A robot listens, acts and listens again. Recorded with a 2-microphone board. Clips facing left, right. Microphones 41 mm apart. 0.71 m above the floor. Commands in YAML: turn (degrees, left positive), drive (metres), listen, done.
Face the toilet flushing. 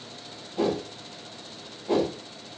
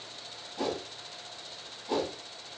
listen: true
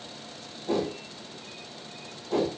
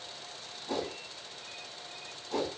listen: true
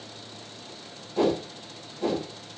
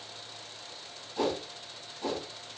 done: "I can't make out a toilet flushing to turn to."